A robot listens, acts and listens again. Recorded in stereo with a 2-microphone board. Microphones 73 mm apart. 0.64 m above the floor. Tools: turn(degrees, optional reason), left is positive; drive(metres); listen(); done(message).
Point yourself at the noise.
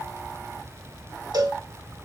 turn(degrees=-70, reason="The cowbell: about 70° right or 110° right.")
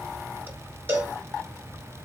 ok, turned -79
turn(degrees=-30, reason="So it is at 30° right.")
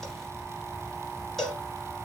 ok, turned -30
done("Found it: a cowbell, straight ahead, 1 to 2 m away.")